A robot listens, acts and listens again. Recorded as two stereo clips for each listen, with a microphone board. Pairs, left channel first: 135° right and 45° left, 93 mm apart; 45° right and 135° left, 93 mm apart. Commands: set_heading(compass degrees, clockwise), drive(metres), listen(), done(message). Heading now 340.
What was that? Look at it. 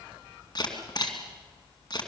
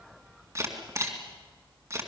set_heading(155)
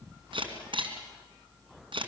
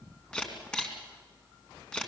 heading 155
set_heading(120)
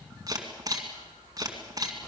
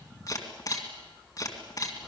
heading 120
done("Facing the camera shutter.")